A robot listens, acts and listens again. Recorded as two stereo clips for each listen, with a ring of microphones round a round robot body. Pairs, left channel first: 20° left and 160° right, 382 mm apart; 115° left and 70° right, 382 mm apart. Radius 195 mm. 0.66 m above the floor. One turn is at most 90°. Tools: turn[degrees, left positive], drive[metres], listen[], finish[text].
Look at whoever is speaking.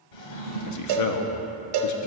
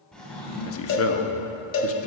Thought: The man speaking: 60° left.
Action: turn[60]
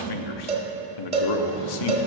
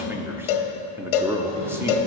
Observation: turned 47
Thought: The man speaking is now 15° left.
Action: turn[15]
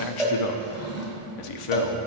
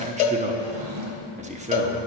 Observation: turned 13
Action: finish[Facing the man speaking, under 1 m away.]